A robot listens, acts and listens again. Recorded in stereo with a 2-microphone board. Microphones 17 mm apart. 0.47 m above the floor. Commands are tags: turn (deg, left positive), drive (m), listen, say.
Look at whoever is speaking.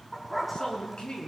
<turn deg="50"/>
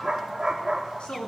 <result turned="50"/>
<turn deg="80"/>
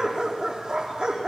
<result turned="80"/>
<listen/>
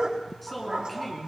<say>Found it: a man speaking, straight ahead, over 4 m away.</say>